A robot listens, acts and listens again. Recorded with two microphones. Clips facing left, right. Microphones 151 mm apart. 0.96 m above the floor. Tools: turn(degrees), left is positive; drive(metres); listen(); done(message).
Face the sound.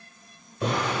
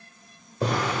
turn(degrees=-35)
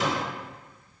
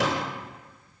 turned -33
turn(degrees=-110)
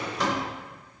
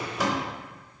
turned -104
done("Found it: a drawer, straight ahead, under 1 m away.")